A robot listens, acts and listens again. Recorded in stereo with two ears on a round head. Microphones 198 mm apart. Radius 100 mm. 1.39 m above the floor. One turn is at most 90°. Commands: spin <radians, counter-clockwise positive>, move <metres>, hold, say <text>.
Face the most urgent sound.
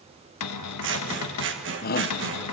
spin 0.70
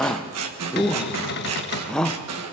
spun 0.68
say Found it: a shout, straight ahead, 1 to 2 m away.